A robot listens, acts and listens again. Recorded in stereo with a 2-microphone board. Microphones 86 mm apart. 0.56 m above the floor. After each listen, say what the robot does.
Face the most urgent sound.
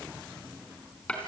Keep listening.
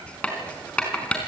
Keep listening.
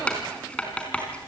I can't make out anything urgent to turn to.